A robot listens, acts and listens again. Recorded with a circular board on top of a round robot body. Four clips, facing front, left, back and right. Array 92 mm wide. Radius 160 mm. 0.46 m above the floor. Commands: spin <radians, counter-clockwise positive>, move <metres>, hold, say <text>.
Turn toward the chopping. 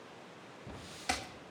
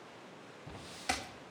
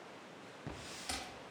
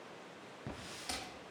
spin 0.79
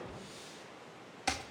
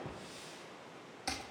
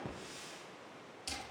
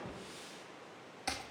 say Found it: chopping, straight ahead, 1 to 2 m away.